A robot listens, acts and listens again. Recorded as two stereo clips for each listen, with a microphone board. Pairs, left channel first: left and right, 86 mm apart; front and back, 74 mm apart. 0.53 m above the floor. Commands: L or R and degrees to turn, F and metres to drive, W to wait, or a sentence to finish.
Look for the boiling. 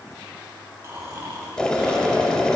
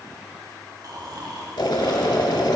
L10
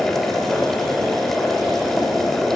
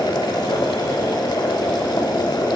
Facing the boiling.